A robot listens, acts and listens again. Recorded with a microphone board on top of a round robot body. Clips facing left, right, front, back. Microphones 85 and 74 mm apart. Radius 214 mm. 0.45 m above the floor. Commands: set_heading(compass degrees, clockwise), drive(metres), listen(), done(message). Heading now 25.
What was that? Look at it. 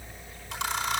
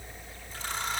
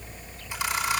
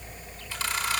set_heading(310)
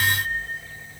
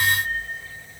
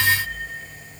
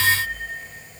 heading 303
set_heading(313)
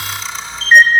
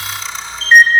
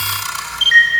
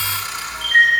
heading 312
done("Found it: a camera shutter, straight ahead, over 4 m away.")